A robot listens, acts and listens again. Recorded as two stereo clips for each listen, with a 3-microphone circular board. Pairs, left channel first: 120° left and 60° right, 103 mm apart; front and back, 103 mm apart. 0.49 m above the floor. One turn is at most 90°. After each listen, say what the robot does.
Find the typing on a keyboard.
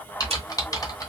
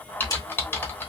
Turn 65° left.
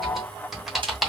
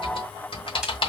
Turn 25° left.
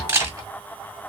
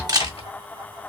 Found it: typing on a keyboard, straight ahead.